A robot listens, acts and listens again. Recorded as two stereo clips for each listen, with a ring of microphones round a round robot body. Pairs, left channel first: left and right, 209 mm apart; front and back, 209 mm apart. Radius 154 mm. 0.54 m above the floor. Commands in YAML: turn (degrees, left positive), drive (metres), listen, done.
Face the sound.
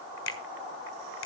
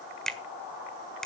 turn: 85
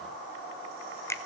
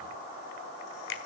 turn: 15
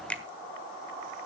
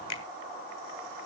done: "Facing the finger snap."